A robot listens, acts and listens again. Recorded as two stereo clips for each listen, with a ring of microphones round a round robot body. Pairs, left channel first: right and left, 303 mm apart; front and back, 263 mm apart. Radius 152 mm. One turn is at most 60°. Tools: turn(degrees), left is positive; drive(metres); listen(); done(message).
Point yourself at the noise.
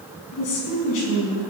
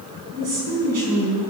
turn(degrees=-60)
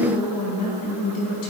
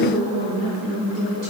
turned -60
turn(degrees=-60)
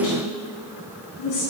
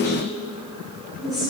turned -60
turn(degrees=-60)
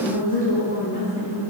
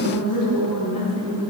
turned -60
turn(degrees=-30)
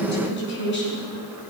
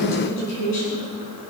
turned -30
turn(degrees=-35)
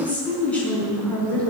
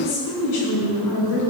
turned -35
done("Facing the woman speaking, over 4 m away.")